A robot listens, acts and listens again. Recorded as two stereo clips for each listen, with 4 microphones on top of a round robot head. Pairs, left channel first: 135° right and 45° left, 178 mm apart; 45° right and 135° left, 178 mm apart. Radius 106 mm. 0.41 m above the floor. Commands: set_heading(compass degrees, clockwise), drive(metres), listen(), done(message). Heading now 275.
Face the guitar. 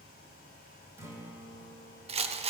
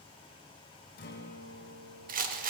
set_heading(300)
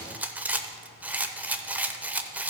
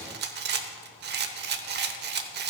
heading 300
listen()
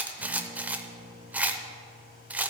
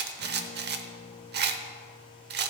done("Facing the guitar.")